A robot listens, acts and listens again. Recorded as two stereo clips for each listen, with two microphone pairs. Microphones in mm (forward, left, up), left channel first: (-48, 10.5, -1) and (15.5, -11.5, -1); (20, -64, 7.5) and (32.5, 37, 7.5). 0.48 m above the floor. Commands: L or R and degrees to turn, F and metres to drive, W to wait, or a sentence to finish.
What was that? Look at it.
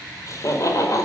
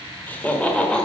R175
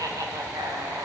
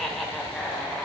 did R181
R20
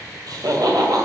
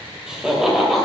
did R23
Found it: laughter, straight ahead.